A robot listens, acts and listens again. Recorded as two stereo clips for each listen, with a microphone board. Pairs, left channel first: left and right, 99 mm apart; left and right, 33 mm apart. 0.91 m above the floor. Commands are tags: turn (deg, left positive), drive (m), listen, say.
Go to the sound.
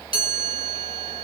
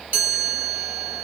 <turn deg="-70"/>
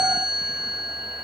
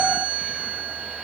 <drive m="1.0"/>
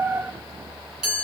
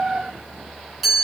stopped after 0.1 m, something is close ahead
<say>Blocked. The chime is further on, straight ahead.</say>